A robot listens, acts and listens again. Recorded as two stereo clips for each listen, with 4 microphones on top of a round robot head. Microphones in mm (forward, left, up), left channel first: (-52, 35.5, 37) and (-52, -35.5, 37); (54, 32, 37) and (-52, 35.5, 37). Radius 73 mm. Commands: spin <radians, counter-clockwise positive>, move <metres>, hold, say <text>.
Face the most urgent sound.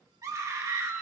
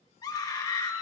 spin -0.87
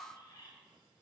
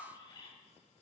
hold
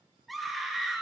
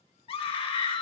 say Facing the scream.